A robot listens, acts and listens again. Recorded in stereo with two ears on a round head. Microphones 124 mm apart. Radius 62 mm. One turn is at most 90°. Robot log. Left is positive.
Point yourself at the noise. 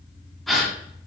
cmd yaw +30
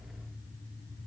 cmd idle
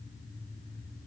end: I heard a gasp, but can't make it out now. It was about 30° right or 150° left.